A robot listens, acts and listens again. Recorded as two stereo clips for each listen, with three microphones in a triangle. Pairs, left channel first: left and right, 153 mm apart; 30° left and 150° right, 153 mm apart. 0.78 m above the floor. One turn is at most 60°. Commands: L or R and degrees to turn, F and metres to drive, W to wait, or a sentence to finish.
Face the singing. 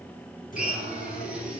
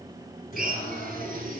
L60
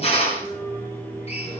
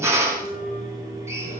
L15
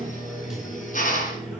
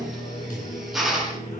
Found it: singing, straight ahead.